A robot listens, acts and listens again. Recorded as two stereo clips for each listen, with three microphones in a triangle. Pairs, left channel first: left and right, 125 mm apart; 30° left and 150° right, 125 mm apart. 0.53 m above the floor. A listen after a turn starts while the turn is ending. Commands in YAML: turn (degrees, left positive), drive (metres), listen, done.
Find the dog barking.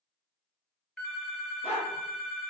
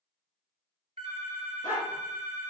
turn: 55
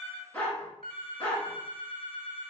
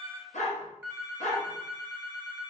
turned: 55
turn: 10
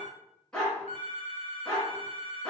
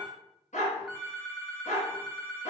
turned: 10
done: "Found it: a dog barking, straight ahead, 1 to 2 m away."